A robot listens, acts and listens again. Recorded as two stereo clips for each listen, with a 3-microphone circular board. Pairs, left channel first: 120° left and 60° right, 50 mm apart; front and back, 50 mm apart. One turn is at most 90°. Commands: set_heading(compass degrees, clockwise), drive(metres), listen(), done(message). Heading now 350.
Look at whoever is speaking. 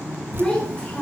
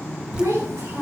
set_heading(80)
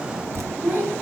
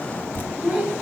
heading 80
set_heading(170)
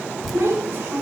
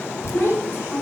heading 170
set_heading(210)
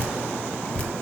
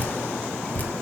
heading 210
listen()
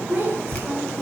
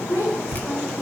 set_heading(220)
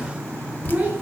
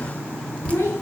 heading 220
done("Found it: a child speaking, straight ahead.")